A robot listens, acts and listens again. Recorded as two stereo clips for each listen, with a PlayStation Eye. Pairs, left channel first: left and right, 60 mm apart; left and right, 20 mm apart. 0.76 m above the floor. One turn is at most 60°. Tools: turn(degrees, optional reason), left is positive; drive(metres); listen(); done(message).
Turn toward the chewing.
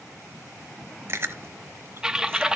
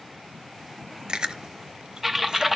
turn(degrees=-45, reason="The chewing: about 45° right or 135° right.")
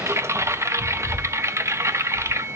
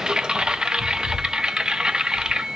turn(degrees=-60, reason="So it is at 80° right.")
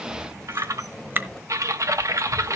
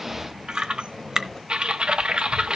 turn(degrees=-40, reason="The chewing is now 40° right.")
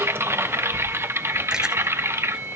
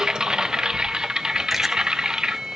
listen()
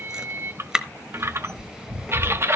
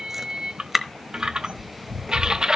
turn(degrees=-10, reason="The chewing is now 10° right.")
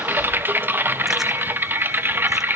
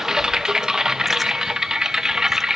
listen()
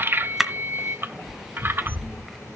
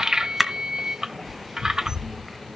done("Facing the chewing.")